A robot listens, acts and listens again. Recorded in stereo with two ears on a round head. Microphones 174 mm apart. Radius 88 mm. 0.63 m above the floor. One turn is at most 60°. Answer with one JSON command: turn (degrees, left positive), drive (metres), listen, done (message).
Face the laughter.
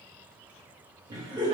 {"turn": -25}
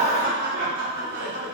{"turn": -60}
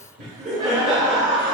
{"turn": -35}
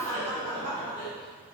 {"turn": 15}
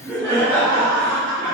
{"done": "Facing the laughter."}